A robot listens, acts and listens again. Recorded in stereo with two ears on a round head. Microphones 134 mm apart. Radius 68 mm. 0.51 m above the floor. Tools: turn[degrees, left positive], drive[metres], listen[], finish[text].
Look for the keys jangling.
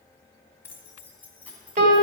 Action: turn[30]
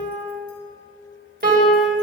Action: listen[]
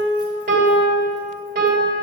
Action: listen[]
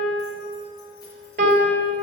Action: finish[I heard keys jangling, but can't make it out now. It was about 20° right or 140° left.]